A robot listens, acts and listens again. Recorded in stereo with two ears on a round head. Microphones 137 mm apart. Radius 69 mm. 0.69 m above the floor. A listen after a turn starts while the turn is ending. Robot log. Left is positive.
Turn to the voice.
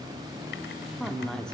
cmd yaw +30
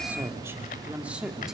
cmd yaw -30
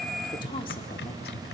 cmd idle
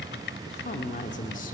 note: So it is at 55° left.
cmd yaw +55
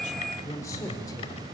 note: The woman speaking is now 25° left.
cmd yaw +25
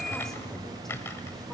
cmd idle
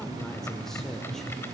end: Found it: a woman speaking, straight ahead, 2 to 4 m away.